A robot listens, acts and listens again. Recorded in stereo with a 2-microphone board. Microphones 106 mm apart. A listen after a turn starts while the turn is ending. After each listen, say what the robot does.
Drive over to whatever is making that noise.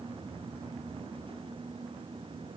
Keep listening.
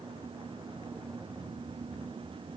Keep listening.
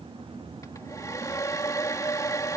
Turn 30° left.
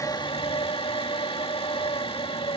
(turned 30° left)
Turn 115° left.
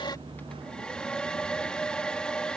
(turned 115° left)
Turn 10° left.
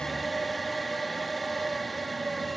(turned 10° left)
Drive 1.0 m forward.
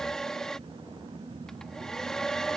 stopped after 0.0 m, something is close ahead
Blocked. The hair dryer is further on, straight ahead.